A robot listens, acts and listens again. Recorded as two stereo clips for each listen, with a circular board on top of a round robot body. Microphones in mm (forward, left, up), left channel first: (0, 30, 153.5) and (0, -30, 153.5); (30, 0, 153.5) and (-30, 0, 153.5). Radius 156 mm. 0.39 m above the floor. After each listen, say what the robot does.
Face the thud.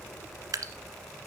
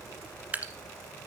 Keep listening.
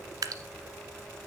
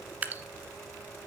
Keep listening.
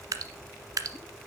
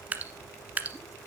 I can't make out a thud, only dripping.